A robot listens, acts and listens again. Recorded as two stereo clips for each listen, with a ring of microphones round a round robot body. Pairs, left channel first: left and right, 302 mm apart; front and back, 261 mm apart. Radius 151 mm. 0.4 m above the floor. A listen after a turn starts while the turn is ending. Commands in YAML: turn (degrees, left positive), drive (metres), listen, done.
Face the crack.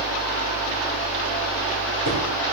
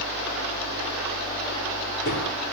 listen: true
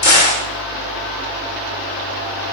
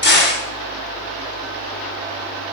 turn: 50
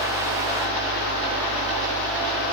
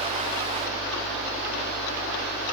done: "I heard a crack from this way, but can't make it out now."